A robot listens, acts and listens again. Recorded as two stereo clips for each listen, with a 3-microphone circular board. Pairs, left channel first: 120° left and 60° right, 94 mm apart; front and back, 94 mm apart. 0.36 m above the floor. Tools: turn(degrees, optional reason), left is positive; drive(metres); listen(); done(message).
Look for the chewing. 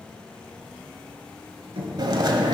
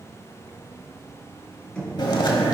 turn(degrees=-30, reason="The chewing: 30° right.")
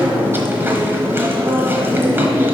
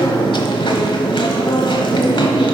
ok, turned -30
done("Facing the chewing, 1 to 2 m away.")